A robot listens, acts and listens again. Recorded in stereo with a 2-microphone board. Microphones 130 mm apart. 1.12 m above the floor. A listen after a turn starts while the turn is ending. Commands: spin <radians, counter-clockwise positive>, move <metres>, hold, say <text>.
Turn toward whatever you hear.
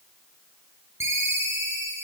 spin -0.35
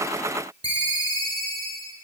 spin -2.36
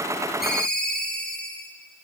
spin 0.17
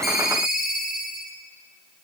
say Found it: a ringtone, straight ahead.